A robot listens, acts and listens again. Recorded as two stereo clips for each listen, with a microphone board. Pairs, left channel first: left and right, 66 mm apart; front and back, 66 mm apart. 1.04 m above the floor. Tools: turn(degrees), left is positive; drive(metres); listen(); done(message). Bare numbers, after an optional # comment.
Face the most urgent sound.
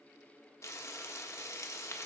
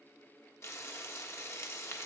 listen()
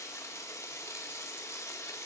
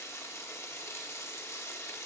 listen()
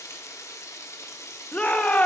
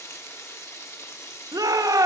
# The shout: 160° left.
turn(160)
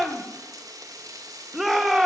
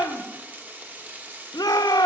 done("Facing the shout, under 1 m away.")